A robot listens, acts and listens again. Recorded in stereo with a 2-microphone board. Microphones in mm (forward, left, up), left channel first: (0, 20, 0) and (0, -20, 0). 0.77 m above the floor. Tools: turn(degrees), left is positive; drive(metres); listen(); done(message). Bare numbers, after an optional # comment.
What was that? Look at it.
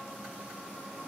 listen()
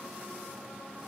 listen()
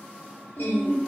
# The singing: about 60° left or 120° left.
turn(60)
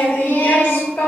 # So it is at 60° left.
turn(60)
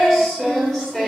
# The singing is now 10° left.
turn(10)
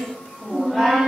done("Found it: singing, straight ahead.")